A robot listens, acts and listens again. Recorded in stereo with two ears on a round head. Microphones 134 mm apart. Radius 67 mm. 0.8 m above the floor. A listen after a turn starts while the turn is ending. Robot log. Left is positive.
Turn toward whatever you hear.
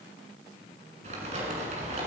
note: The crumpling: about 45° right or 135° right.
cmd yaw -45
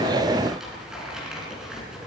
end: Facing the crumpling, over 4 m away.